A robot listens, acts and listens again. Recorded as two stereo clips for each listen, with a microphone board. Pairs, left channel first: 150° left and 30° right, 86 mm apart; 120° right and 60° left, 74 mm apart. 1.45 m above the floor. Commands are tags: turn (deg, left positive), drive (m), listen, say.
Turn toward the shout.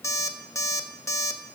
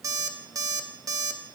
<listen/>
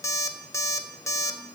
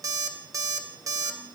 <listen/>
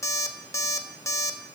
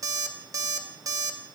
<say>I can't make out a shout to turn to.</say>